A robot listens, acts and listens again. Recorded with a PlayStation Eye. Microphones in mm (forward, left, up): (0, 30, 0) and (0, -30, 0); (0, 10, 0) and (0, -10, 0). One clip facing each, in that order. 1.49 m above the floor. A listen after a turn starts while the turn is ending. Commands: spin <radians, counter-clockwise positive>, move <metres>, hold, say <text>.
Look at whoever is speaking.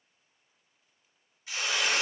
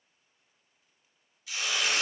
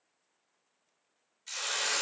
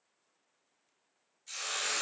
hold
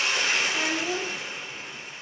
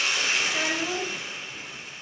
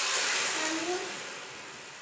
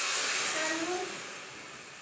spin -0.79
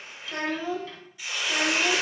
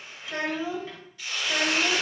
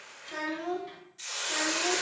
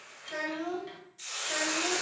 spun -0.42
spin -0.52
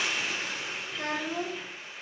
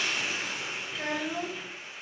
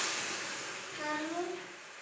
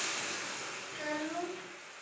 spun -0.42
say Facing the child speaking.